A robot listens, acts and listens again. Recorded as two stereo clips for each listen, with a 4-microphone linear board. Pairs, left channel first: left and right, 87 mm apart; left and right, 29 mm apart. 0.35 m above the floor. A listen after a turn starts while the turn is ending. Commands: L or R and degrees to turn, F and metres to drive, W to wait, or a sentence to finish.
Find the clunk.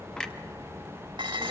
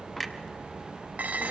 L30
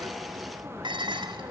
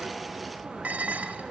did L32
W
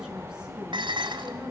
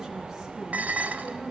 I heard a clunk, but can't make it out now. It was about 25° right or 140° left.